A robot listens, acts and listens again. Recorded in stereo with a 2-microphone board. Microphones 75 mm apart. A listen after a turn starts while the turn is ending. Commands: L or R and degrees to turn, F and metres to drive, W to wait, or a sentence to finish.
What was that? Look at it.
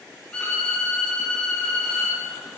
L30
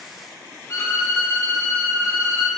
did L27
L140
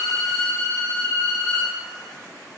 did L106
L35
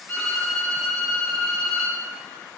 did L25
L10
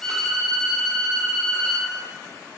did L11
Facing the violin.